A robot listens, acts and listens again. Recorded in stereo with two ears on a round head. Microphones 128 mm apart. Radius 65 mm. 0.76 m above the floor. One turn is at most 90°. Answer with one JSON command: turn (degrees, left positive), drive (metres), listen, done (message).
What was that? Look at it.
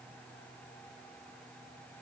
{"listen": true}
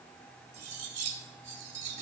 {"turn": -50}
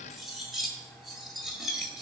{"done": "Facing the cutlery clinking, 2 to 4 m away."}